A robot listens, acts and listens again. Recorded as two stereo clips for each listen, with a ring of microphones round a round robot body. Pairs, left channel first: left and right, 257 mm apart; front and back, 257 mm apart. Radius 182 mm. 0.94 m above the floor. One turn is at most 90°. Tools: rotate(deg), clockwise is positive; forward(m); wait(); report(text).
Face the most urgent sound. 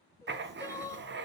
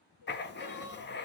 rotate(-10)
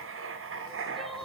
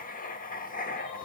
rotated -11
wait()
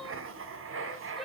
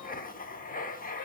wait()
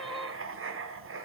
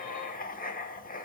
report("Facing where the crying came from. I can't hear it now.")